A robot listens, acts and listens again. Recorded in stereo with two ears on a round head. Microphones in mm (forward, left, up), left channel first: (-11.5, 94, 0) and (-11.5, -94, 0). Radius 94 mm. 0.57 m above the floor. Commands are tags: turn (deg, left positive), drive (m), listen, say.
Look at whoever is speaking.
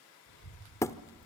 <turn deg="70"/>
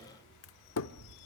<turn deg="45"/>
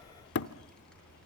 <say>Found it: a child speaking, straight ahead.</say>